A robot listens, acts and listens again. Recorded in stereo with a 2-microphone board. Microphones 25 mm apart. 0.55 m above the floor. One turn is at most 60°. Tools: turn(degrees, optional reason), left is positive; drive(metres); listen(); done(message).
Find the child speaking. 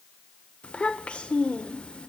turn(degrees=60, reason="The child speaking: about 65° left or 115° left.")
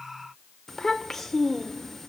turn(degrees=20, reason="So it is at 20° left.")
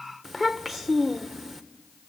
done("Found it: a child speaking, straight ahead, 1 to 2 m away.")